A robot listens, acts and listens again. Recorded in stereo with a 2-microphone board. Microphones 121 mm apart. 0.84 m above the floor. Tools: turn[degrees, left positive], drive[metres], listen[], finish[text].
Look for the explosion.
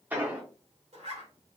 Action: turn[-30]
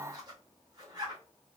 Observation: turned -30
Action: listen[]
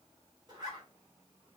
Action: finish[I heard an explosion, but can't make it out now. It was about 15° left or 135° right.]